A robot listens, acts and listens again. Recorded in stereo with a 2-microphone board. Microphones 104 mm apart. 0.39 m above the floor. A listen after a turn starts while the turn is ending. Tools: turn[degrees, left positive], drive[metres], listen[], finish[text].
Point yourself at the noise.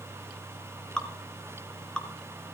Action: turn[30]
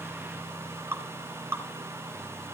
Thought: So it is at 25° right.
Action: turn[-25]
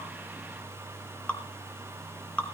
Thought: The dripping is now 10° left.
Action: turn[10]
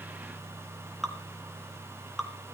Action: finish[Found it: dripping, straight ahead.]